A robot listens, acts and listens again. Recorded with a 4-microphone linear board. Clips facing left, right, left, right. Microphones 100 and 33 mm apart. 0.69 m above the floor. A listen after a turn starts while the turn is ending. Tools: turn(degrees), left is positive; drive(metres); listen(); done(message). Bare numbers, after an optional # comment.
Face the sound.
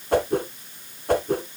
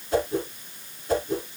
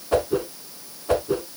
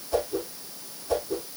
# The whoosh: about 60° left or 120° left.
turn(60)
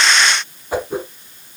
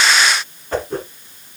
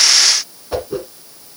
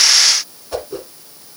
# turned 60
# So it is at 10° left.
turn(10)
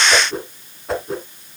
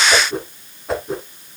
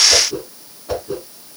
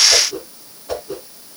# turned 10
done("Found it: a whoosh, straight ahead.")